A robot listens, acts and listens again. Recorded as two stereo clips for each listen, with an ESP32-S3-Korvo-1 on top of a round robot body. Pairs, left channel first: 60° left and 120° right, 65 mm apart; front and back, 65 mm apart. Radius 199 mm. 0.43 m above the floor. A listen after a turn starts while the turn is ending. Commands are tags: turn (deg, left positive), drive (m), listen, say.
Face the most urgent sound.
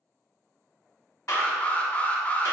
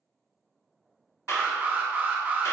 <turn deg="125"/>
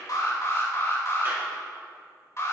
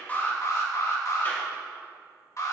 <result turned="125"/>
<turn deg="25"/>
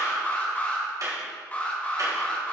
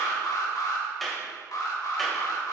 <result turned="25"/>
<say>Facing the alarm.</say>